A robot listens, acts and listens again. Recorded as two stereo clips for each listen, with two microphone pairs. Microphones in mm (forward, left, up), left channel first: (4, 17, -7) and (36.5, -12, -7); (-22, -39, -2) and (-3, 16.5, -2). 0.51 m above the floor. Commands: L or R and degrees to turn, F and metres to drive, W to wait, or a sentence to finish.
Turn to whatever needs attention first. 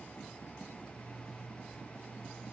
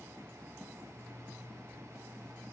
W
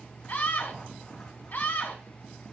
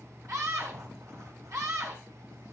L95
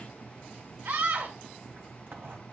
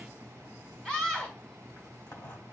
R30
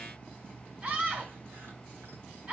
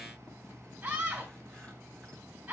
L10
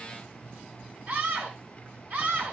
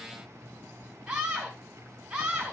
Facing the scream, 2 to 4 m away.